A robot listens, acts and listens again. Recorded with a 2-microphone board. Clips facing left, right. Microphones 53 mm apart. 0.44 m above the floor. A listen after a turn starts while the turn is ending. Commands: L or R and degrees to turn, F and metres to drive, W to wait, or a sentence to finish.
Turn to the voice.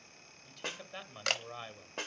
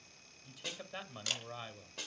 L30
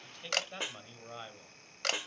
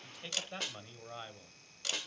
L30
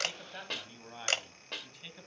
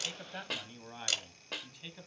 L30
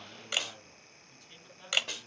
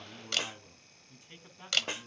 R25
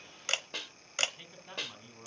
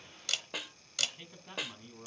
Found it: a man speaking, straight ahead, 2 to 4 m away.